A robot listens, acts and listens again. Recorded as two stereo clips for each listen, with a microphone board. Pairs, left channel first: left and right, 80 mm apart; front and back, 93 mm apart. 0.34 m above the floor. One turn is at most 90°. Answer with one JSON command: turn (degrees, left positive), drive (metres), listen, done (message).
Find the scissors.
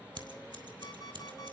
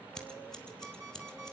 {"turn": -85}
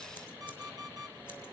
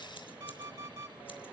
{"listen": true}
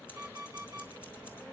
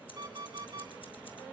{"listen": true}
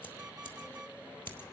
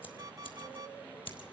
{"turn": 25}
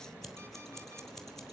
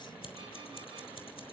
{"done": "Facing the scissors, 2 to 4 m away."}